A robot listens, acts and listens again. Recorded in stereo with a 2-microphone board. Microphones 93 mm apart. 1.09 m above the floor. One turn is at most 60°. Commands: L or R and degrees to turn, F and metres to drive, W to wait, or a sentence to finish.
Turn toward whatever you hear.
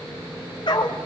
L55
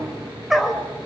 Found it: a dog barking, straight ahead.